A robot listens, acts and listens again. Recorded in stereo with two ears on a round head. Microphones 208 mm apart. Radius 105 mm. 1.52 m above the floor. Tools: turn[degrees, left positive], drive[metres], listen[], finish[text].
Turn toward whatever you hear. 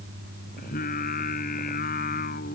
Thought: The singing: about 35° left or 145° left.
Action: turn[35]
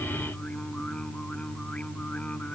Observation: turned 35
Action: finish[Facing the singing.]